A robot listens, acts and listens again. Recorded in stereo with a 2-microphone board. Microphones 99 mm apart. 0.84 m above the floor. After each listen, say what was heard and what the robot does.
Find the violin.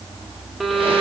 Turn 30° left.
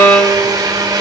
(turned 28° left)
So it is at 150° left. Turn 150° left.
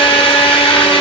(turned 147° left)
Keep listening.
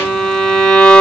Found it: a violin, straight ahead, 1 to 2 m away.